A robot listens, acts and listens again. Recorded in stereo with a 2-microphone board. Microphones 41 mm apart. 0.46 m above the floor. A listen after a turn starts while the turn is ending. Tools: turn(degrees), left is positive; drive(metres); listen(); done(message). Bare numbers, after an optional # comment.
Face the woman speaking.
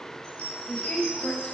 # The woman speaking: about 20° left or 160° left.
turn(20)
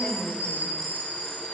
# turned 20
done("Found it: a woman speaking, straight ahead.")